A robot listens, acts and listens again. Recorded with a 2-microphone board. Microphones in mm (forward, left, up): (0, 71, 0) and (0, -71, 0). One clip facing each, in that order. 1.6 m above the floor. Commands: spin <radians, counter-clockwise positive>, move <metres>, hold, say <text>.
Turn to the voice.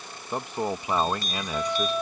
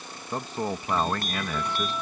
spin 0.35
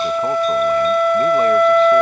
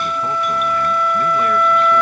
hold
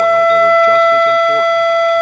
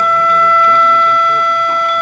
hold
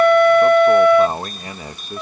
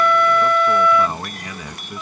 spin 2.53
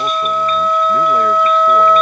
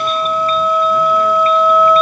hold
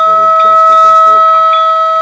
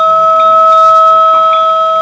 hold
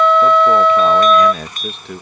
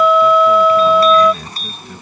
spin 1.40
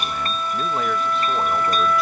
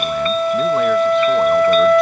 hold
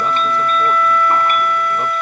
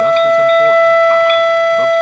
hold
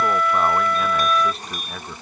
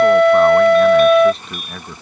say Found it: a man speaking, straight ahead.